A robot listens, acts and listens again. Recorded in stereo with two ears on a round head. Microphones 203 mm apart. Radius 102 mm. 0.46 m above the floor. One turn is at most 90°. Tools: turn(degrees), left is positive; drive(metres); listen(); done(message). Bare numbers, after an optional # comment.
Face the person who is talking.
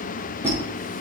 listen()
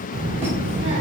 # The child speaking: about 50° right or 130° right.
turn(-50)
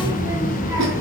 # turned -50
# So it is at 15° right.
turn(-15)
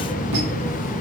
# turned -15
done("Found it: a child speaking, straight ahead.")